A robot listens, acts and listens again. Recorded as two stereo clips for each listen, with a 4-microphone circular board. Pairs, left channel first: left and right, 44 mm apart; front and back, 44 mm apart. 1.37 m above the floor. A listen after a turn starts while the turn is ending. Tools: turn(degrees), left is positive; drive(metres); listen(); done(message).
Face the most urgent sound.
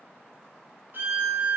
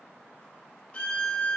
listen()
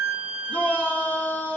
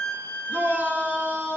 turn(degrees=145)
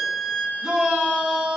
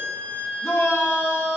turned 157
turn(degrees=-10)
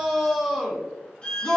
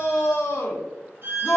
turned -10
done("Facing the shout.")